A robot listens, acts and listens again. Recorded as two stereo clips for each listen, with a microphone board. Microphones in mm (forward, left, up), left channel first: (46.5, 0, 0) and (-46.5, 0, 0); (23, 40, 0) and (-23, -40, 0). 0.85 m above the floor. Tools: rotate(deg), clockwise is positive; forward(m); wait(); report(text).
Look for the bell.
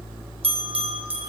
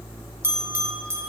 rotate(-175)
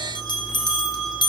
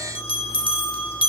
rotate(-40)
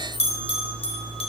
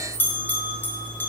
rotate(10)
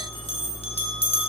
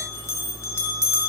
report("Facing the bell.")